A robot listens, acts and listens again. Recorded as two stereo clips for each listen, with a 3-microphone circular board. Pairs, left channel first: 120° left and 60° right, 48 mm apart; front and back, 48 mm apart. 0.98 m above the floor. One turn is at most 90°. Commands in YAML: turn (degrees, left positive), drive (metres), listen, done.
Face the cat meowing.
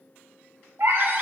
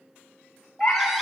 turn: -65
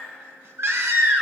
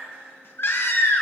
listen: true
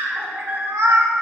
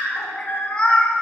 turn: -70
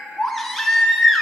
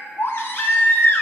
listen: true
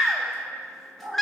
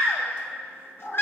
turn: -35
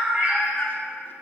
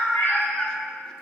done: "Found it: a cat meowing, straight ahead, 2 to 4 m away."